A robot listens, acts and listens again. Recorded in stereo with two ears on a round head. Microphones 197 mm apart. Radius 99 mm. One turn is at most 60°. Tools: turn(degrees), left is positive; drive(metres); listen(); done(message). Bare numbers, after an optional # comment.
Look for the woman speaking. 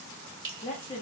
# The woman speaking: about 30° left or 150° left.
turn(30)
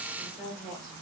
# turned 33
done("Facing the woman speaking.")